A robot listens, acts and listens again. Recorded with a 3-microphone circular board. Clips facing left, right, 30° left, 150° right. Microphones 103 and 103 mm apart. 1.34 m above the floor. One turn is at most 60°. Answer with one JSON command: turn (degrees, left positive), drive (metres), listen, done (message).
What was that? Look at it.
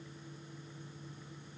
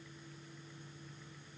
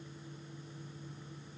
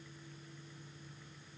{"listen": true}
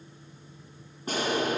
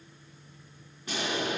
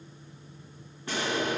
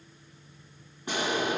{"turn": 60}
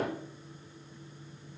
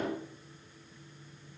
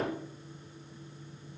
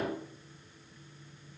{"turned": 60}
{"turn": 60}
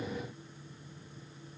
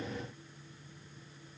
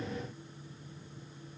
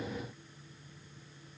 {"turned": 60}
{"turn": 20}
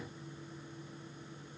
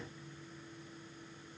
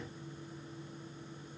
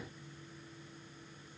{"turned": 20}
{"done": "I heard an explosion from this way, but can't make it out now."}